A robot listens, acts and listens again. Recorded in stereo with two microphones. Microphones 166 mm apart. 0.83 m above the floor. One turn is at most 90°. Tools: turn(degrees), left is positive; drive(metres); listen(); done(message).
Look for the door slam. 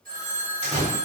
turn(degrees=40)
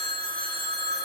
listen()
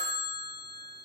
done("I heard a door slam, but can't make it out now. It was about straight ahead or 100° left.")